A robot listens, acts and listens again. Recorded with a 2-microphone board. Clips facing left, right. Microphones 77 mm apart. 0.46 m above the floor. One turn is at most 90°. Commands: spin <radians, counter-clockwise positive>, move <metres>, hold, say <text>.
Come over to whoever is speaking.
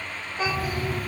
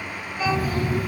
spin 0.52
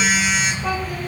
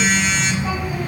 hold
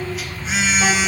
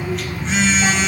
hold
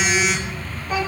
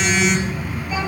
spin 1.57
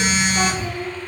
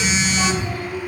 spin 1.31
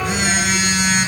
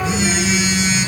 hold
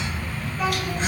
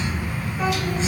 hold
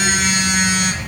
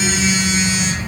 say I heard a child speaking from this way, but can't make it out now. I did not reach it.